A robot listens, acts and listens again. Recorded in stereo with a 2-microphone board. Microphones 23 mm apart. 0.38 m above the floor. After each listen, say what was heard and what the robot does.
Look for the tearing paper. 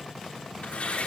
Turn 90° left.
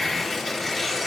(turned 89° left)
So it is at 10° left. Turn 10° left.
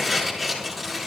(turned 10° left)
Found it: tearing paper, straight ahead, over 4 m away.